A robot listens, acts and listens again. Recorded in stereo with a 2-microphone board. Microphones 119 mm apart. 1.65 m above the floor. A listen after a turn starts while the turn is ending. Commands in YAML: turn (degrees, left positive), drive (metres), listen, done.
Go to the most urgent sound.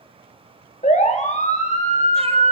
turn: 90
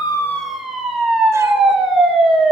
drive: 1.0
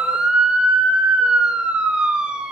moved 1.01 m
drive: 1.0
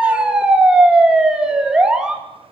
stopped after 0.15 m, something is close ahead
done: "Something is in my way. I am facing the siren but have not reached it."